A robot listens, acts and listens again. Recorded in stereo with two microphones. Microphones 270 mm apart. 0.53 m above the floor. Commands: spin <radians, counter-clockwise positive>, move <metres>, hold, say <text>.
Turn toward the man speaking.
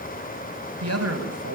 spin -1.13
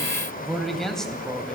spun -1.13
say Found it: a man speaking, straight ahead, 2 to 4 m away.